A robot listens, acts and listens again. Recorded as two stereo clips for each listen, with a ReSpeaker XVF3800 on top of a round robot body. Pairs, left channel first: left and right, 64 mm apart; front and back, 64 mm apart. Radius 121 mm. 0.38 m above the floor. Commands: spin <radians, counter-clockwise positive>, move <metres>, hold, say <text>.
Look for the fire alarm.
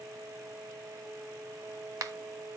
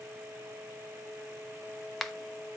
hold
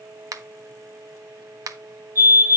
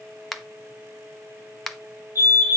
spin -2.44
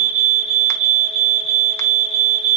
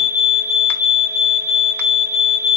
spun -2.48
say Found it: a fire alarm, straight ahead.